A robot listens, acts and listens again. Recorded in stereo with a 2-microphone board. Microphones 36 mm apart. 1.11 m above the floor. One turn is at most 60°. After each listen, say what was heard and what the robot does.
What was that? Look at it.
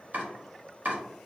The chopping: about 50° right or 130° right. Turn 50° right.
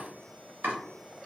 So it is at 75° right. Turn 60° right.
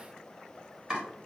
The chopping is now 25° right. Turn 25° right.
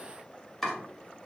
Facing the chopping.